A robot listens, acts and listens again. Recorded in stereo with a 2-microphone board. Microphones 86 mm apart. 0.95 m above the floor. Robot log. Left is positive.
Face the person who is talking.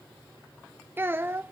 note: The child speaking: about 25° right or 155° right.
cmd yaw -25
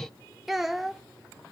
end: Facing the child speaking.